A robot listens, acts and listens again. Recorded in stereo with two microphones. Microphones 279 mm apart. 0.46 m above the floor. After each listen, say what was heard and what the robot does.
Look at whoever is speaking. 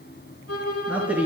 Turn 30° right.
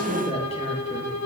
So it is at 25° left. Turn 25° left.
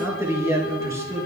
The man speaking is now 10° right. Turn 10° right.
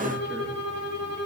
Keep listening.
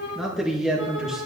Found it: a man speaking, straight ahead.